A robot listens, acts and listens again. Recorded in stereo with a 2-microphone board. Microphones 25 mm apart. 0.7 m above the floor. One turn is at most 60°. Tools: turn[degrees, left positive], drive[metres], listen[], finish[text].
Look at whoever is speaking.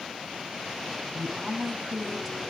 Action: turn[-30]
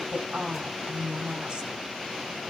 Thought: So it is at 140° right.
Action: turn[-60]
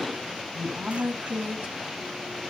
Thought: The woman speaking is now 80° right.
Action: turn[-60]
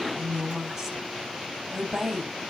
Thought: The woman speaking is now 20° right.
Action: turn[-20]
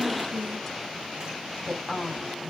Action: finish[Facing the woman speaking.]